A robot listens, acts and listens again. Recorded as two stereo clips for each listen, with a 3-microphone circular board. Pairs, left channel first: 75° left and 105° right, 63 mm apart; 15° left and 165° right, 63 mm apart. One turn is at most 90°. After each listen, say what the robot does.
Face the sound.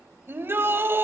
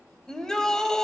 Turn 65° right.
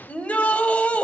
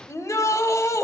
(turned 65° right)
Turn 15° left.
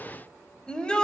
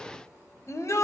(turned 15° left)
Found it: a shout, straight ahead, 1 to 2 m away.